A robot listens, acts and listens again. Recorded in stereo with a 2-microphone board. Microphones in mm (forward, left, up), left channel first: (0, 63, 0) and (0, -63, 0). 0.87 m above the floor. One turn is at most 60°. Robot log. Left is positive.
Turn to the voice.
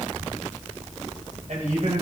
note: The man speaking: about 75° right or 105° right.
cmd yaw -60
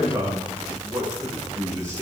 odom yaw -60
note: So it is at 25° right.
cmd yaw -25
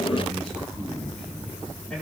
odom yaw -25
end: Found it: a man speaking, straight ahead.